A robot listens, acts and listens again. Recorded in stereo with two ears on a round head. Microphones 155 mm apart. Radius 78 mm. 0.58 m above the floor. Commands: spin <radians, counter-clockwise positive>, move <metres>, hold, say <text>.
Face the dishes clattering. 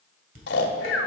spin -0.87
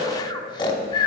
hold
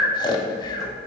hold
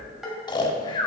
say Facing the dishes clattering.